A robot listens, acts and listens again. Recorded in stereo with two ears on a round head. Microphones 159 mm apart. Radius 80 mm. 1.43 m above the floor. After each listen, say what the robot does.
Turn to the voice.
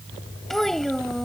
Turn 30° left.
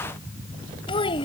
Turn 150° left.
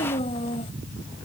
Turn 35° left.
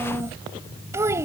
Turn 15° right.
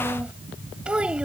Found it: a child speaking, straight ahead.